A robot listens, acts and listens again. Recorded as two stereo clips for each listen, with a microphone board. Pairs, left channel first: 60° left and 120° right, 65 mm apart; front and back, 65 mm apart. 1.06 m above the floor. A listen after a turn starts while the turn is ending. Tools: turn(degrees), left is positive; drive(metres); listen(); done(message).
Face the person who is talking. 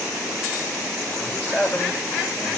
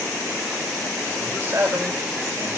turn(degrees=125)
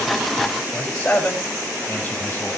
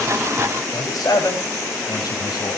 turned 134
done("Found it: a man speaking, straight ahead.")